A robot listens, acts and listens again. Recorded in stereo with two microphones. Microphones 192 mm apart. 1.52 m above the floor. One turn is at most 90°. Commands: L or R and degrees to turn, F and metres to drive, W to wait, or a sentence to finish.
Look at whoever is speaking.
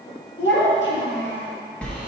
L70
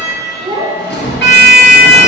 R25
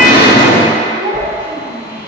R50
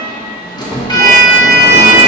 W
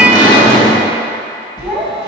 R15
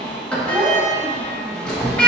Found it: a child speaking, straight ahead.